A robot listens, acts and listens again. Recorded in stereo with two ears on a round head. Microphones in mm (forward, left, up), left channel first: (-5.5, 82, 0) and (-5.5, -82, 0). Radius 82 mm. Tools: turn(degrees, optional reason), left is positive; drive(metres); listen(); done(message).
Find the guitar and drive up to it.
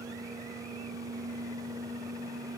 listen()
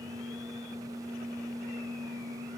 listen()
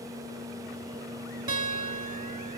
turn(degrees=-25, reason="The guitar: about 25° right or 155° right.")
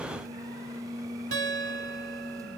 turn(degrees=-130, reason="So it is at 130° right.")
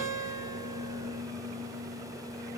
turn(degrees=-45, reason="The guitar is now 45° right.")
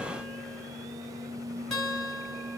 drive(metres=1.0)
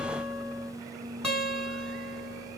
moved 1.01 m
drive(metres=1.0)
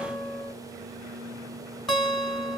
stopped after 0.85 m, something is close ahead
done("I am next to the guitar.")